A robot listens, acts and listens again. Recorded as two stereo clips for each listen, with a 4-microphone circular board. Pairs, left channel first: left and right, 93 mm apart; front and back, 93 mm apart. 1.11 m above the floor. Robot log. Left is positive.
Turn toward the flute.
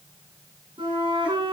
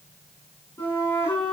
note: The flute: 65° right.
cmd yaw -65
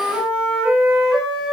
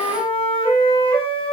end: Found it: a flute, straight ahead.